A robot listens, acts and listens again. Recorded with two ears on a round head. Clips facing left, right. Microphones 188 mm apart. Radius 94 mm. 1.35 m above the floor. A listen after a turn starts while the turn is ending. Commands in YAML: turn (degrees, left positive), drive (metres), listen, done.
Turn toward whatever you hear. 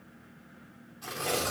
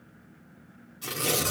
turn: -40
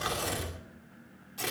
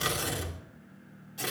done: "Found it: tearing paper, straight ahead."